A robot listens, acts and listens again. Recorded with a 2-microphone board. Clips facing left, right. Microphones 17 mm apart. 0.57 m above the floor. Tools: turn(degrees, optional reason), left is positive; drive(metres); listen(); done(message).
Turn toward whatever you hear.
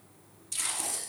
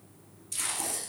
turn(degrees=30)
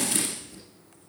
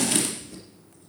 turn(degrees=-25, reason="So it is at 25° right.")
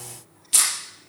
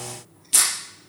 done("Found it: tape being pulled, straight ahead, over 4 m away.")